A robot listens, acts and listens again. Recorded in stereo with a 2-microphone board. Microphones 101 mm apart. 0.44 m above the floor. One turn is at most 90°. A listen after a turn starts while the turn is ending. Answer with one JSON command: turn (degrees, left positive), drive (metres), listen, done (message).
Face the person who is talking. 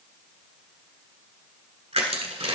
{"listen": true}
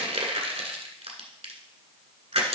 {"listen": true}
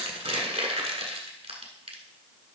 {"done": "I can't make out anyone speaking, only crushing."}